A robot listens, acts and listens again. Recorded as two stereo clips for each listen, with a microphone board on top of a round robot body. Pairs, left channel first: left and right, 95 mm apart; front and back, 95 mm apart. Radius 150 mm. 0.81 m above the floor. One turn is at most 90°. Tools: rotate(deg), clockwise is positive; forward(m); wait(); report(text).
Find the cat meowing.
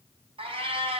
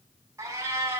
rotate(90)
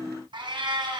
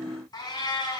rotate(45)
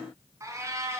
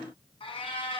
rotate(25)
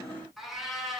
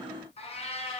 report("Found it: a cat meowing, straight ahead, 2 to 4 m away.")